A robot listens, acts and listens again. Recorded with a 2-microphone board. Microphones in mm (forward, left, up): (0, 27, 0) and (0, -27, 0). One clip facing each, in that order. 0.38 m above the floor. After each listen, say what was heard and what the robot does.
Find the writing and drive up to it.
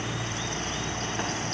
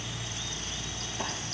Keep listening.
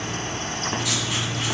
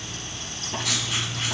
Turn 30° left.
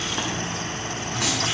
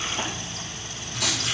So it is at 135° left. Turn 135° left.
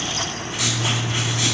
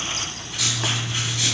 The writing is now 25° left. Turn 25° left.
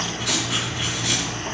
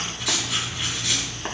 Drive 1.0 m forward.
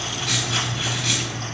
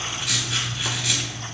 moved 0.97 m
Drive 1.0 m forward.
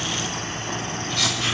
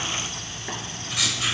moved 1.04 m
The writing is now 15° right. Turn 15° right.
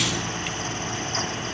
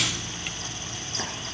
Keep listening.
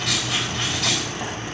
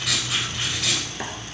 Drive 1.0 m forward.
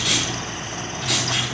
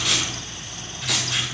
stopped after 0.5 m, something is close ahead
I am next to the writing.